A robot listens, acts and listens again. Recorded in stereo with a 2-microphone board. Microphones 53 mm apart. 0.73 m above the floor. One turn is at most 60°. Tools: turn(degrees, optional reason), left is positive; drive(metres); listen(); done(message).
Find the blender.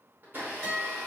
turn(degrees=-40, reason="The blender: about 40° right or 140° right.")
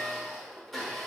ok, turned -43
done("Facing the blender, under 1 m away.")